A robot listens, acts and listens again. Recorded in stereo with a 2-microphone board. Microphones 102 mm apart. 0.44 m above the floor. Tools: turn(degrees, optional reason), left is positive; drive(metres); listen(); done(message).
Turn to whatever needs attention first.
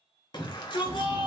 turn(degrees=45, reason="The shout: about 45° left or 135° left.")
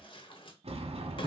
listen()
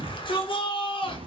turn(degrees=75, reason="So it is at 75° left.")
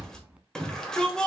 done("Facing the shout.")